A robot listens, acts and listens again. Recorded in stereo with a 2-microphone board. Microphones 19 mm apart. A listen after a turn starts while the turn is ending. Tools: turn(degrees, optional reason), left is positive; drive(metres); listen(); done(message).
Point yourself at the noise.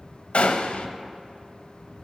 turn(degrees=60, reason="The gunshot: about 60° left or 120° left.")
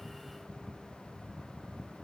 listen()
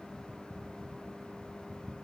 done("I heard a gunshot, but can't make it out now. It was about straight ahead or 60° left.")